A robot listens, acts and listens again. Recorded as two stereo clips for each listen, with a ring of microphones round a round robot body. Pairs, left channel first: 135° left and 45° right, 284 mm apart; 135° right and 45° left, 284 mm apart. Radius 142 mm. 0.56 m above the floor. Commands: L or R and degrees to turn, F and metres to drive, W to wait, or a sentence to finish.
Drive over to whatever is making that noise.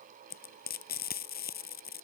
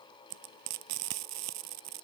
L75
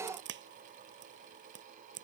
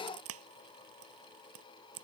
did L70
F1.0
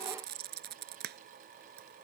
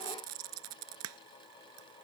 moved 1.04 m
L10
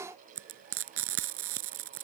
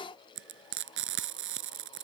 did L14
F1.0
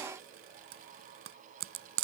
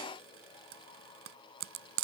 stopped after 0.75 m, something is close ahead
I am next to the frying.